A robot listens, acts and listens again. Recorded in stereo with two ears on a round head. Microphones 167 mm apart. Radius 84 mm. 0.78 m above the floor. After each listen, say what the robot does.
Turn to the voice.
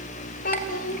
Turn 50° left.
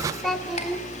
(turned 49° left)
Facing the child speaking.